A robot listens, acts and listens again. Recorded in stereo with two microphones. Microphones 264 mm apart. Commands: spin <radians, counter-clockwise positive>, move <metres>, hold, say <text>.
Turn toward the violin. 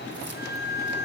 spin -0.52
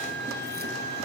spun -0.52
hold
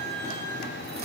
hold
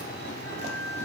say I heard a violin, but can't make it out now. It was about 20° left or 140° right.